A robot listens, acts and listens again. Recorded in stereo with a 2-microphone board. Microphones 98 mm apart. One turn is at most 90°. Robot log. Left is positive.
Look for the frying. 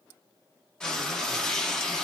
cmd yaw +30
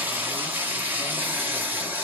note: So it is at 20° right.
cmd yaw -20
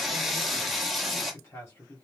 end: Facing the frying, 1 to 2 m away.